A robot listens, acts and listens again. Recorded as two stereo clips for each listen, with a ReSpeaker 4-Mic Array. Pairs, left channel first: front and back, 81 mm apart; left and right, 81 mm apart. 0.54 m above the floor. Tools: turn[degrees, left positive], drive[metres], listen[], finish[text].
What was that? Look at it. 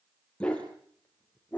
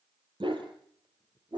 Thought: The dog barking: 70° right.
Action: turn[-70]
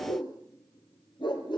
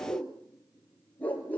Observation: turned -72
Thought: The dog barking is now 20° left.
Action: turn[20]
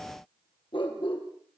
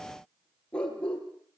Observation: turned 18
Thought: The dog barking is now 15° left.
Action: turn[15]
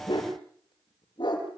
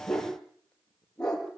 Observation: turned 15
Action: finish[Facing the dog barking, over 4 m away.]